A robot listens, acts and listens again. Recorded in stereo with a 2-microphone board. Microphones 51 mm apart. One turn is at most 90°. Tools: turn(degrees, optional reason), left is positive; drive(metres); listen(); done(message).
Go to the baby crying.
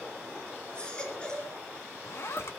turn(degrees=20, reason="The baby crying: about 20° left or 160° left.")
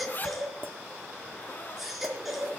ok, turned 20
drive(metres=1.0)
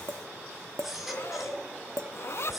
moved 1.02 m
drive(metres=1.0)
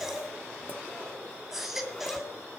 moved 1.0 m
drive(metres=1.0)
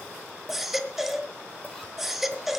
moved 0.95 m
drive(metres=1.0)
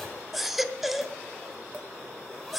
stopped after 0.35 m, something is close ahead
done("Arrived at the baby crying, straight ahead.")